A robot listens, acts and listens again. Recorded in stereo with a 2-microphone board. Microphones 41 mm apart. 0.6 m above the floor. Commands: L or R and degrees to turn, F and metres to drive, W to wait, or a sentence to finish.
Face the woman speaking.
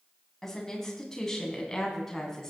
L30
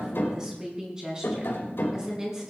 R20
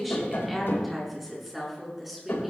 Facing the woman speaking.